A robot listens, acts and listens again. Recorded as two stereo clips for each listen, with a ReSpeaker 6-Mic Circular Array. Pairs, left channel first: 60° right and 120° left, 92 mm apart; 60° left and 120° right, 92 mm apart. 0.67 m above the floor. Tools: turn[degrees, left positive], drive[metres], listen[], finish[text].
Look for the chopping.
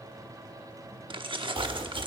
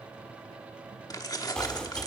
Thought: The chopping: 140° left.
Action: turn[140]
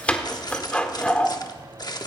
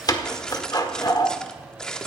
Thought: The chopping is now 15° left.
Action: turn[15]
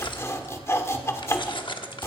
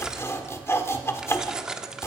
Action: finish[Found it: chopping, straight ahead, 1 to 2 m away.]